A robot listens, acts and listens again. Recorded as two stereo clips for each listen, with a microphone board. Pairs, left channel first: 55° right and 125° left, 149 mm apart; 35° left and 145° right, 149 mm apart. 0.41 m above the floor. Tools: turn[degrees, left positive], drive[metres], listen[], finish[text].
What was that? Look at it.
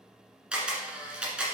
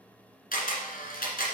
Thought: The camera shutter: 40° left.
Action: turn[40]
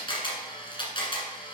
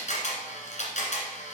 Action: finish[Found it: a camera shutter, straight ahead, 1 to 2 m away.]